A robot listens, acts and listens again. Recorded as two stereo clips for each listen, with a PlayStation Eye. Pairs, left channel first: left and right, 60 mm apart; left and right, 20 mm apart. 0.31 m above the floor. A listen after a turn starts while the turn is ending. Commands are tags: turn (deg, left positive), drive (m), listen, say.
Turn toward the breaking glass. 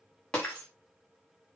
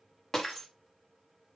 <turn deg="15"/>
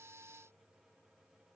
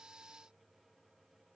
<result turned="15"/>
<listen/>
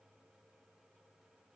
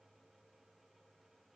<say>I heard breaking glass, but can't make it out now. It was about straight ahead or 150° left.</say>